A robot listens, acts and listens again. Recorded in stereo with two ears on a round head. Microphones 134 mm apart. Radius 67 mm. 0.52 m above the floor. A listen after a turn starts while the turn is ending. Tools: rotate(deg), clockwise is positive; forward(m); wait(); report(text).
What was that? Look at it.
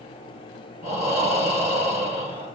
rotate(-40)
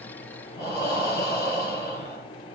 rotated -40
rotate(-95)
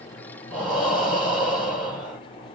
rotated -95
report("Found it: breathing, straight ahead, 2 to 4 m away.")